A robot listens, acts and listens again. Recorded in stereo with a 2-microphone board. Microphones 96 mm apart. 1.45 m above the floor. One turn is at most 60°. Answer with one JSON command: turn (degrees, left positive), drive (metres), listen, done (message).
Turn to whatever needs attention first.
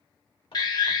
{"turn": 50}
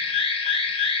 {"turn": 60}
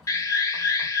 {"turn": 35}
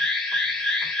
{"done": "Found it: an alarm, straight ahead."}